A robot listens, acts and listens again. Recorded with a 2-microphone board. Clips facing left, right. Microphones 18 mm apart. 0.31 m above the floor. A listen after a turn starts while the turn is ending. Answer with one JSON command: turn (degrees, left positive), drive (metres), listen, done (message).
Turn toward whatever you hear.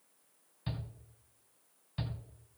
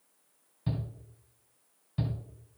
{"turn": 20}
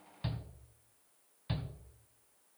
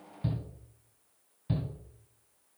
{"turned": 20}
{"turn": 135}
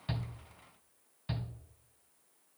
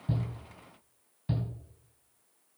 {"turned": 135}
{"turn": 30}
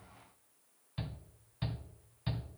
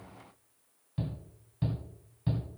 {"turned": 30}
{"turn": 35}
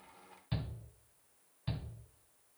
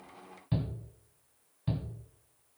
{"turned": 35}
{"turn": 15}
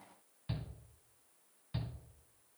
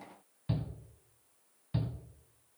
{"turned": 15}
{"done": "Found it: a shout, straight ahead."}